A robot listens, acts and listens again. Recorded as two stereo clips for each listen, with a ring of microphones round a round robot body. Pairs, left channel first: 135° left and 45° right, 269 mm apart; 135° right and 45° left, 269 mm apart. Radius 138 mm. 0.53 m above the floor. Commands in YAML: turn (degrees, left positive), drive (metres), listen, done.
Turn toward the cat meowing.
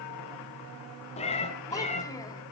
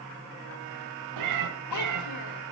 turn: 70
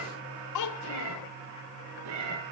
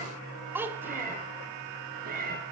turn: -15
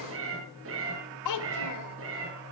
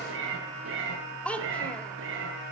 done: "Facing the cat meowing."